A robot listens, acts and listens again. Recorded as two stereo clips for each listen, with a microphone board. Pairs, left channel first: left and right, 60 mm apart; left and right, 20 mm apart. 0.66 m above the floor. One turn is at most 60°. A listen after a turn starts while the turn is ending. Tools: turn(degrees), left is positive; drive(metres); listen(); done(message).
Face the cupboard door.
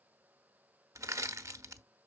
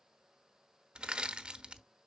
listen()
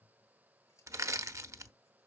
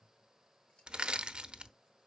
listen()
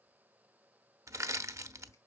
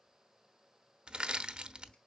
done("I can't make out a cupboard door, only crushing and scissors.")